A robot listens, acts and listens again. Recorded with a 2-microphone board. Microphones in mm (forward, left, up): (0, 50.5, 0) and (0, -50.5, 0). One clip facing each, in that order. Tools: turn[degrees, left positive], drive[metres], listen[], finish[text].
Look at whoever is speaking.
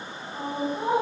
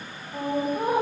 Thought: The woman speaking: about 60° right or 120° right.
Action: turn[-60]
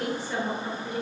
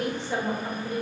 Thought: So it is at 25° right.
Action: turn[-25]
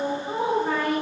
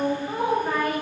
Thought: The woman speaking is now 10° left.
Action: turn[10]
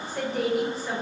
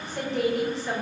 Action: finish[Found it: a woman speaking, straight ahead, 1 to 2 m away.]